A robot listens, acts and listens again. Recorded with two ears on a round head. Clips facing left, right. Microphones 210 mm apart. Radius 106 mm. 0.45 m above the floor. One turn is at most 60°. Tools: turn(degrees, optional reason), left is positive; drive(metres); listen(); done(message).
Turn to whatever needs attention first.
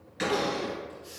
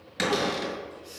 turn(degrees=55, reason="The crying: about 55° left or 125° left.")
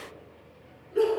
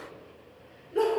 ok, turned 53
done("Found it: crying, straight ahead, 2 to 4 m away.")